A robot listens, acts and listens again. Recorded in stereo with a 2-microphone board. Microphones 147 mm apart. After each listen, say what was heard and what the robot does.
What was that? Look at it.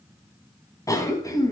The cough: about 20° left or 160° left. Turn 20° left.
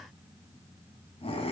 So it is at 140° left. Turn 140° left.
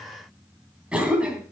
Found it: a cough, straight ahead.